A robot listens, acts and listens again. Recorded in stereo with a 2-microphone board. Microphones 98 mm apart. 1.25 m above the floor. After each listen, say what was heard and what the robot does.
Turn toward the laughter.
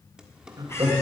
The laughter: about 35° right or 145° right. Turn 35° right.
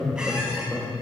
Facing the laughter, 2 to 4 m away.